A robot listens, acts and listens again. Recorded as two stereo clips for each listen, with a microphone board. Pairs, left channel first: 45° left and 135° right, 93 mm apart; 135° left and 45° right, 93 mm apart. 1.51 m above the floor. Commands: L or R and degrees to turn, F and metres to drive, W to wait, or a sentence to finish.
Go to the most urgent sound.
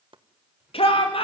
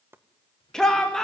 L50
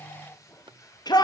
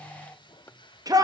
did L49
F1.0
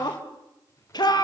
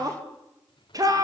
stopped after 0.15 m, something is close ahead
Something is in my way. I am facing the shout but have not reached it.